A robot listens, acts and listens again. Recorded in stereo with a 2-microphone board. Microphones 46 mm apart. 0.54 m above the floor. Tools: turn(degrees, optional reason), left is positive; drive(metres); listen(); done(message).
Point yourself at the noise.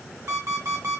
turn(degrees=-75, reason="The alarm clock: about 75° right or 105° right.")
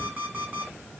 turn(degrees=-35, reason="So it is at 35° right.")
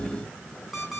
done("Facing the alarm clock, over 4 m away.")